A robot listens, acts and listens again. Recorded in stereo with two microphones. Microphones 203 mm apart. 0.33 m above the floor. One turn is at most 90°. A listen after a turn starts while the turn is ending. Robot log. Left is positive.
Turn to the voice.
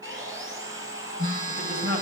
note: The man speaking: about 55° right or 125° right.
cmd yaw -55
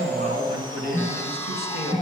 note: So it is at 60° right.
cmd yaw -60
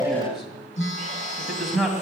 end: Facing the man speaking, 2 to 4 m away.